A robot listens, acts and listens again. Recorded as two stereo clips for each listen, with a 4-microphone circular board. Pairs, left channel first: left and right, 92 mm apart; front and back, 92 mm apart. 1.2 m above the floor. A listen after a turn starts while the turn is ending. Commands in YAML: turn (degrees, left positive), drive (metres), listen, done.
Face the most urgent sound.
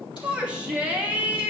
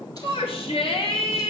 turn: -15
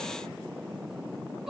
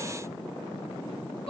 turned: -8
listen: true
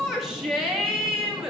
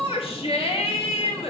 done: "Facing the shout, 2 to 4 m away."